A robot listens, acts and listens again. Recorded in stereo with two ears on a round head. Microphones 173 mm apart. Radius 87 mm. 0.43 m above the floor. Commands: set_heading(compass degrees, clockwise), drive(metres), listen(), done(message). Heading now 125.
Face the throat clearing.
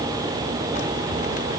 listen()
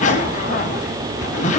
listen()
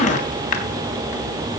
done("I can't make out throat clearing, only a zipper.")